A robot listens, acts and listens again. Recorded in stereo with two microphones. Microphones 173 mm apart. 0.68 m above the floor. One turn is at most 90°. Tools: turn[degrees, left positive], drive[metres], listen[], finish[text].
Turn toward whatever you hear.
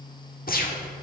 Thought: The gunshot: about 60° left or 120° left.
Action: turn[60]
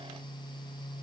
Action: listen[]
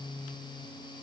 Action: finish[I heard a gunshot, but can't make it out now. It was about straight ahead or 60° left.]